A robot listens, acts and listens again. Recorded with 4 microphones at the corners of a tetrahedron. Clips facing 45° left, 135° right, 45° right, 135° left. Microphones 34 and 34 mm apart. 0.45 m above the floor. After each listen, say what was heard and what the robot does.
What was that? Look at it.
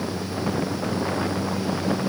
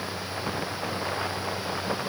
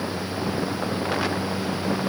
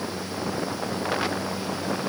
Keep listening.
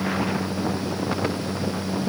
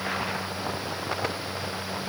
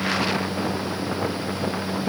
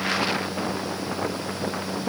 Keep listening.
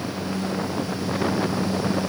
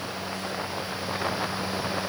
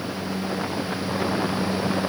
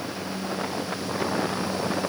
I can't make out anything to turn to.